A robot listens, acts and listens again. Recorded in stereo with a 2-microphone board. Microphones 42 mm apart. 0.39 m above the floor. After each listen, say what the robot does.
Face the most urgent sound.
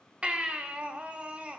Turn 25° right.
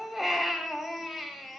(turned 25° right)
Found it: a baby crying, straight ahead.